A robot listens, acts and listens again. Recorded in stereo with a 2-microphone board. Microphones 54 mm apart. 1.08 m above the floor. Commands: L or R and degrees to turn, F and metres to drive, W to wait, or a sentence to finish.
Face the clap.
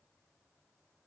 W
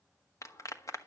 L90
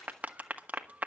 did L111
R30
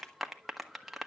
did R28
Facing the clap, 1 to 2 m away.